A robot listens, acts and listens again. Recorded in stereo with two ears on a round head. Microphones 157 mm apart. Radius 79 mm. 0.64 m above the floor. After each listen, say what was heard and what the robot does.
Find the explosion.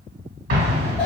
The explosion: about 55° right or 125° right. Turn 55° right.
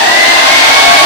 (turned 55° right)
Keep listening.
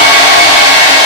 I heard an explosion, but can't make it out now. It was about straight ahead or 70° right.